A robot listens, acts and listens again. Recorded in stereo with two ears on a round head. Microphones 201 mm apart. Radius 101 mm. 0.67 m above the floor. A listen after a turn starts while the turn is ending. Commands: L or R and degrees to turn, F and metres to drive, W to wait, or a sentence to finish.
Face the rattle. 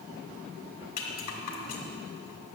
L40
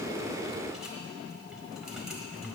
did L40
Found it: a rattle, straight ahead, 1 to 2 m away.